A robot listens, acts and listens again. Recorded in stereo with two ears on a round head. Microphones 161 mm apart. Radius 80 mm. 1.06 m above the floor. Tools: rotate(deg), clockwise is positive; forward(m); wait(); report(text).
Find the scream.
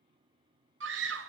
rotate(75)
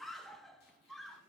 report("Facing the scream.")